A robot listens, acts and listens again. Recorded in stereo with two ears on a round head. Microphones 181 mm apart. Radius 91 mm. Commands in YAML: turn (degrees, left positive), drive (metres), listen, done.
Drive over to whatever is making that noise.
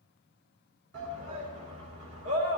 turn: -90
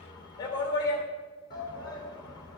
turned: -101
turn: 20
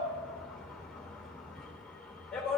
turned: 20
drive: 1.0
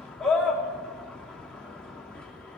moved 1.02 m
drive: 1.0
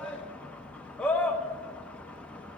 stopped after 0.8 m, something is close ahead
done: "Arrived at the shout, straight ahead."